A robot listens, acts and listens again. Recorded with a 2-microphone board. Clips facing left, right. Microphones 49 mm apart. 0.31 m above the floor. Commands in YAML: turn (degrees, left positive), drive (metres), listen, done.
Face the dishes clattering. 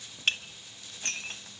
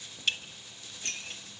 turn: 45
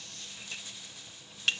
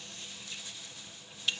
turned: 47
turn: 80
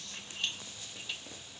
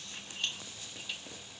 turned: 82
done: "Found it: dishes clattering, straight ahead."